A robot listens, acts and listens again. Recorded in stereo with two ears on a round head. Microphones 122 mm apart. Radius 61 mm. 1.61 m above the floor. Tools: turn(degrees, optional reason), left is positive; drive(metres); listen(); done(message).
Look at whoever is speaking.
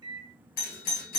listen()
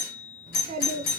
turn(degrees=-65, reason="The child speaking: about 65° right or 115° right.")
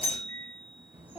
turn(degrees=-15, reason="So it is at 15° right.")
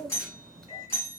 done("Facing the child speaking.")